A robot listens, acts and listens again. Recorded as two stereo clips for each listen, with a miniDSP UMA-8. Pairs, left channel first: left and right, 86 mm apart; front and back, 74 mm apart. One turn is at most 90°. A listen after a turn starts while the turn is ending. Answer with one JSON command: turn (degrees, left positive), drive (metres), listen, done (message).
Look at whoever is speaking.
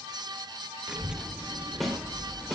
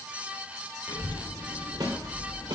{"turn": -10}
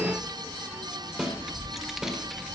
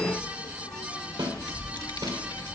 {"done": "Facing the child speaking, 1 to 2 m away."}